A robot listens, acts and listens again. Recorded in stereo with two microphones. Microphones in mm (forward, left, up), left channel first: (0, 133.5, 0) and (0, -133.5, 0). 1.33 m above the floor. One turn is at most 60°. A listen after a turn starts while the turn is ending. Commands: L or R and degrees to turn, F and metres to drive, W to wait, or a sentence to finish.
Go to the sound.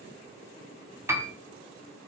R30
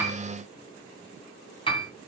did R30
L20
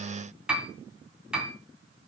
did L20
F1.0
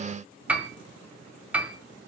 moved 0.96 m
F1.0
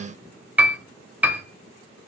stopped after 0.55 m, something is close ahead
R10
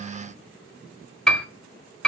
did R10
I am next to the piano.